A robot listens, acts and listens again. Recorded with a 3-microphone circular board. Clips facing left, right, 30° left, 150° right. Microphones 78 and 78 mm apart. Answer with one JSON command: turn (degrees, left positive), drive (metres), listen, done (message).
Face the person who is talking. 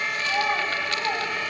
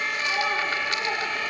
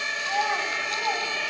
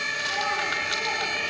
{"turn": 55}
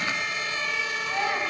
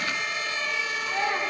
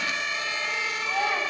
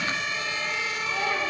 {"turn": 10}
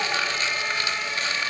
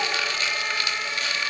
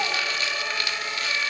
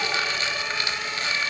{"listen": true}
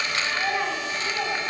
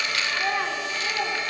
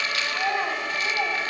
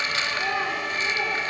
{"done": "Found it: a child speaking, straight ahead, 2 to 4 m away."}